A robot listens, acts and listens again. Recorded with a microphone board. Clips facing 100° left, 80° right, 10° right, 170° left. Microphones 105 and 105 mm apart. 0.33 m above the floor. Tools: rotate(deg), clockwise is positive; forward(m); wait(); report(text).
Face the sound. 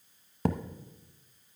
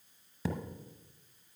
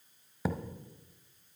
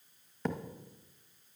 rotate(-70)
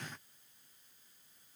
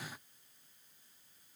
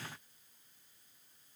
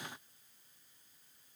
report("Facing where the thud came from. I can't hear it now.")